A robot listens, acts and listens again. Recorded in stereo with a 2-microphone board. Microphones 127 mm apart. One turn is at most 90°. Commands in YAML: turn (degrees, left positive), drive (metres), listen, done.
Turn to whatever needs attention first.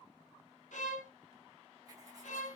listen: true
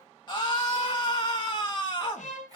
turn: 35
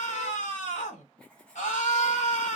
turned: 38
turn: 90
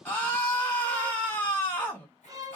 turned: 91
turn: 15
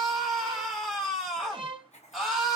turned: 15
done: "Facing the scream, 1 to 2 m away."